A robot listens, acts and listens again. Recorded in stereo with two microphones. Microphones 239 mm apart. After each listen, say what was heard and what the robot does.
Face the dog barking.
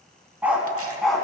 Turn 30° left.
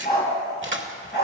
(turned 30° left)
So it is at 135° left. Turn 135° left.
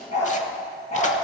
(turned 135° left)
The dog barking is now 30° left. Turn 30° left.
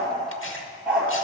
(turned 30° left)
Found it: a dog barking, straight ahead, over 4 m away.